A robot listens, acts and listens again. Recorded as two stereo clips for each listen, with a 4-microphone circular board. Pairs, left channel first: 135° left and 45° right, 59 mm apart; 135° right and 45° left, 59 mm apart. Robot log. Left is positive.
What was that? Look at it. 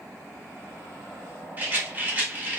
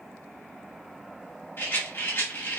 note: The rattle: 95° right.
cmd yaw -95
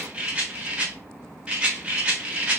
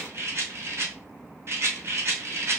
note: The rattle is now 25° left.
cmd yaw +25
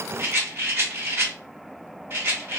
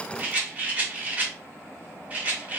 note: The rattle is now 10° right.
cmd yaw -10
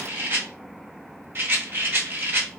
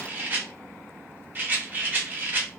end: Found it: a rattle, straight ahead.